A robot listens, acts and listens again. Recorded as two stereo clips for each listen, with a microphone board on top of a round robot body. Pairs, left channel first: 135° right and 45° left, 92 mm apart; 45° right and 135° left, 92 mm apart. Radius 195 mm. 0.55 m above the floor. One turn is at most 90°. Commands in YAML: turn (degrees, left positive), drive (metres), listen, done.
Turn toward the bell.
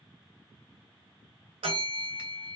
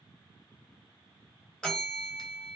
turn: 35
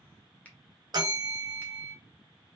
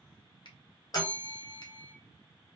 done: "Facing the bell, 1 to 2 m away."